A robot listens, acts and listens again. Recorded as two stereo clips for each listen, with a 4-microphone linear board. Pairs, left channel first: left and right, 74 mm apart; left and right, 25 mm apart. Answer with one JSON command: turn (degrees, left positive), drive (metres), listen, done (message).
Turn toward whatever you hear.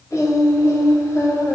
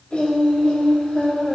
{"turn": 50}
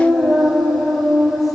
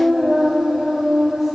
{"done": "Found it: singing, straight ahead."}